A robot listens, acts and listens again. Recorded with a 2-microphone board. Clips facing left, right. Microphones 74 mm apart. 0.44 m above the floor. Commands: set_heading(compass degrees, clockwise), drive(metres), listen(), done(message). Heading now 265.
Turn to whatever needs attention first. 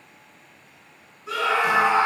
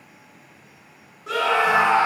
set_heading(330)
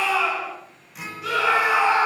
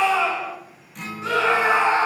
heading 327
set_heading(357)
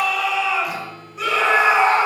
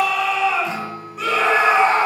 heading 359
done("Found it: a scream, straight ahead, 1 to 2 m away.")